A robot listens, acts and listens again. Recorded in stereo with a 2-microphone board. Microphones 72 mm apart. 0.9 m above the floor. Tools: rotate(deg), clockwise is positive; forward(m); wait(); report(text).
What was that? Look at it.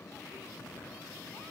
wait()
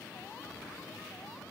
wait()
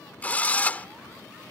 rotate(-20)
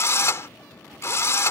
rotate(-140)
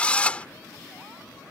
rotate(-20)
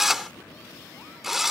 report("Found it: a drill, straight ahead.")